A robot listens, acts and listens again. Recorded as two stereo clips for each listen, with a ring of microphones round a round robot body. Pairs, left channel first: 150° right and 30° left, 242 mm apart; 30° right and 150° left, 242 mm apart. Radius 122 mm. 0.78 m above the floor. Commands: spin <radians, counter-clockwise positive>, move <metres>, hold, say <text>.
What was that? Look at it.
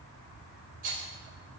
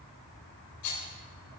spin -0.44
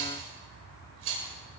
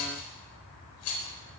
say Found it: a rattle, straight ahead.